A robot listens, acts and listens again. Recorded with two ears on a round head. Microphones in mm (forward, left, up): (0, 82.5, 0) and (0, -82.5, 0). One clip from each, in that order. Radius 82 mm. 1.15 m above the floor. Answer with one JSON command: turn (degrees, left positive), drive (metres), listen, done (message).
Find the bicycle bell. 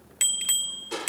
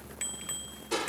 {"turn": 90}
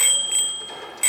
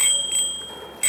{"turn": 10}
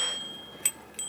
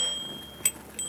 {"done": "Facing the bicycle bell."}